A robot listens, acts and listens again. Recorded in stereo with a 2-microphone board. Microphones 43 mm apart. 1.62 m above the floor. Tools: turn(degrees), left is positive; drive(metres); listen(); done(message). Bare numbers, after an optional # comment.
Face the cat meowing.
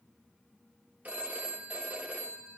listen()
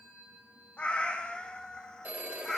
turn(30)
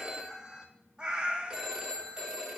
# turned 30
# So it is at 30° right.
turn(-30)
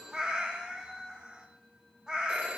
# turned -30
# The cat meowing is now 25° right.
turn(-25)
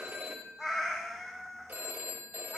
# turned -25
done("Facing the cat meowing, 1 to 2 m away.")